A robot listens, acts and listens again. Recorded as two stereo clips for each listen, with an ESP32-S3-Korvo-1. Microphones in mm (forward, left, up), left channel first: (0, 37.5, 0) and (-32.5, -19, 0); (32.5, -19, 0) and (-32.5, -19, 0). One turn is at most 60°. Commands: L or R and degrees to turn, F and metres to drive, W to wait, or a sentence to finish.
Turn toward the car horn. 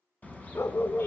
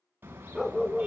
L60
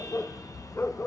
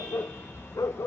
L50
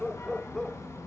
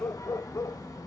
L15
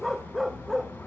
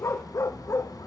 Found it: a car horn, straight ahead, 2 to 4 m away.